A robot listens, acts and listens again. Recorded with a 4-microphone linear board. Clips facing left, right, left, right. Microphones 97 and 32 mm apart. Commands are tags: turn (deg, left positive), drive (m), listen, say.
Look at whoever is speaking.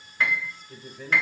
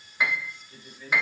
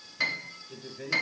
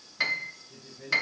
<turn deg="75"/>
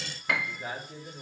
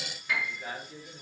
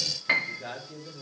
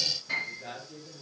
<turn deg="20"/>
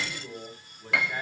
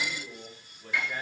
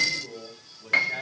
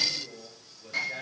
<turn deg="10"/>
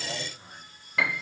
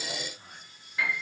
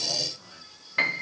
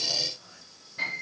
<turn deg="10"/>
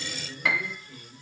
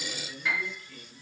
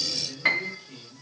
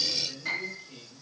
<turn deg="10"/>
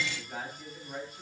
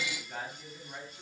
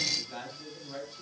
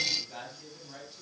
<say>Found it: a man speaking, straight ahead.</say>